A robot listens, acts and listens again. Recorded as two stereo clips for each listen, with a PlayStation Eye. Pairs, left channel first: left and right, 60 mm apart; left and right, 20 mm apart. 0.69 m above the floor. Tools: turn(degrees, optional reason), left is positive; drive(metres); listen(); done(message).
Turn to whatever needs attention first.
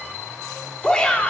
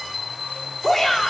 turn(degrees=30)
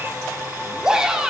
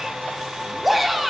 turn(degrees=-15, reason="So it is at 15° right.")
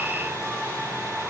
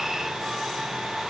listen()
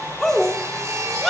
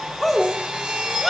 done("Facing the shout.")